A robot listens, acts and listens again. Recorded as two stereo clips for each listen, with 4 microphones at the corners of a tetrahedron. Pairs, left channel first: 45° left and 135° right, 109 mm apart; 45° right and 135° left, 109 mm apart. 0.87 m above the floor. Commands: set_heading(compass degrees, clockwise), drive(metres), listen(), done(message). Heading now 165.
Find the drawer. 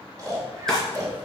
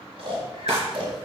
set_heading(35)
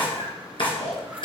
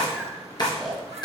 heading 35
done("Facing the drawer, 2 to 4 m away.")